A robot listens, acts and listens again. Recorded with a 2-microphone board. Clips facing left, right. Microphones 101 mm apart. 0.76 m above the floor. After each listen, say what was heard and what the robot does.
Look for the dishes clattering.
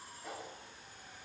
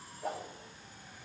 Keep listening.
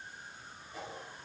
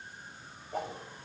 Keep listening.
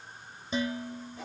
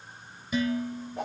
The dishes clattering: about 25° left or 155° left. Turn 25° left.
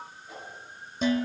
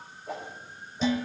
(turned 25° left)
So it is at 125° left. Turn 125° left.
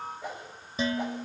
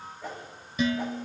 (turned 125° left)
The dishes clattering is now 30° left. Turn 30° left.
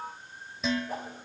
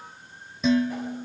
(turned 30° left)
Facing the dishes clattering.